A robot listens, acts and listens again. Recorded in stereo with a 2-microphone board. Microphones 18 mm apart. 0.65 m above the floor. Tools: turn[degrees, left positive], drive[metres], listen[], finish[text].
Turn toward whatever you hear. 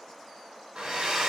Thought: The hair dryer: about 75° right or 105° right.
Action: turn[-75]
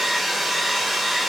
Thought: So it is at 10° right.
Action: turn[-10]
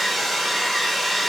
Action: finish[Found it: a hair dryer, straight ahead, under 1 m away.]